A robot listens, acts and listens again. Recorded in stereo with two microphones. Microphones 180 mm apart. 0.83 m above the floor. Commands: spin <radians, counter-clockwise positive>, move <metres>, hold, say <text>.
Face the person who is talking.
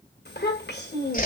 spin 1.22
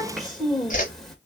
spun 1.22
say Facing the child speaking, 2 to 4 m away.